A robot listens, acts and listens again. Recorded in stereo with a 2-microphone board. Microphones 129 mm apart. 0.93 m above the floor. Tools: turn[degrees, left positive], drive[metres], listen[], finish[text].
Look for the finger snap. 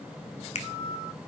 Thought: The finger snap: about 60° left or 120° left.
Action: turn[60]
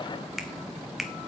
Action: finish[Facing the finger snap.]